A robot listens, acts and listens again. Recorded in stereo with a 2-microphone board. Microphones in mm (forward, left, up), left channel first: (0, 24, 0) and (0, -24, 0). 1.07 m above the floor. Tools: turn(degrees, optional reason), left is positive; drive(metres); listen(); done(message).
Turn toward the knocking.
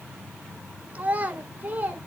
listen()
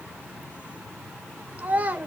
listen()
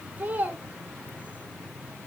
done("I can't make out knocking to turn to.")